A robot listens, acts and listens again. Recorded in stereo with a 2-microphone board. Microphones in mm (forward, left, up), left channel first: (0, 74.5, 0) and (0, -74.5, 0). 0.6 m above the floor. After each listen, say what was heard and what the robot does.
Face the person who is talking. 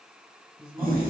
The man speaking: about 25° right or 155° right. Turn 25° right.
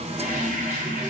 Keep listening.
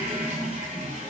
Keep listening.
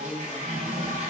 The man speaking: about 15° right or 165° right. Turn 15° right.
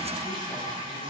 Keep listening.
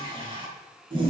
Keep listening.
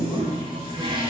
I heard a man speaking, but can't make it out now. It was about straight ahead or 150° right.